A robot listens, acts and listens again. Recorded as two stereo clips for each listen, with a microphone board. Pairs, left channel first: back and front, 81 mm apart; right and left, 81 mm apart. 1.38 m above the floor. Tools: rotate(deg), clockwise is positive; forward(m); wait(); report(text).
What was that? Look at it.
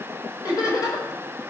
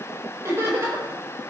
rotate(-145)
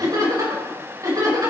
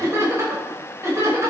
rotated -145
rotate(-40)
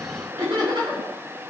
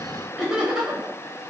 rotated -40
rotate(-10)
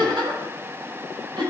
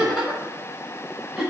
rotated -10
report("Found it: laughter, straight ahead.")